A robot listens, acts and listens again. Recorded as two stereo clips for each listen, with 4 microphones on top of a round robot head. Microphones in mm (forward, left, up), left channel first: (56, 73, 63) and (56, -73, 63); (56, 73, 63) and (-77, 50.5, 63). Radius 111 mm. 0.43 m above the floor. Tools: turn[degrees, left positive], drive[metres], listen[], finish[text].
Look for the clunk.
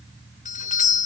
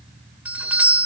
Action: listen[]
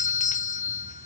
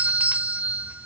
Action: listen[]
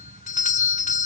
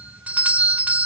Action: finish[I can't make out a clunk, only a doorbell.]